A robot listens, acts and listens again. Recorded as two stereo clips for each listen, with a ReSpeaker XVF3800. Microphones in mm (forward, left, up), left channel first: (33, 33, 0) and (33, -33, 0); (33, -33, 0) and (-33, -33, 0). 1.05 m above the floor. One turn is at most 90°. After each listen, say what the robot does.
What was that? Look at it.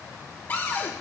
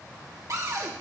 Turn 90° left.
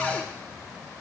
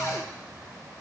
Turn 25° left.
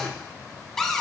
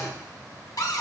Found it: a cupboard door, straight ahead.